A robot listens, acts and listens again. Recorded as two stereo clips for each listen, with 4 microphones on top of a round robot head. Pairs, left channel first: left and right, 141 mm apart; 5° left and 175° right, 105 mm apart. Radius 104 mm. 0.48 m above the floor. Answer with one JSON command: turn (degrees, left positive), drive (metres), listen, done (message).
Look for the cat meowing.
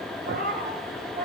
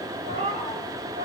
{"turn": -120}
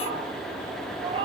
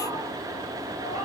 {"turn": -40}
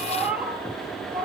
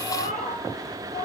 {"done": "Facing the cat meowing."}